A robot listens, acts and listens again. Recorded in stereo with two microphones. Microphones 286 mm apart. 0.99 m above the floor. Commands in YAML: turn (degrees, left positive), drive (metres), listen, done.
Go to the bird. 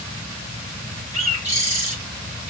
turn: -25
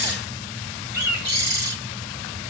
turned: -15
turn: -140
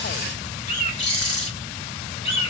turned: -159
turn: 20
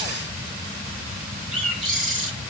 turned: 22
drive: 1.0
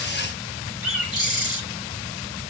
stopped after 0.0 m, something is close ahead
done: "Something is in my way. I am facing the bird but have not reached it."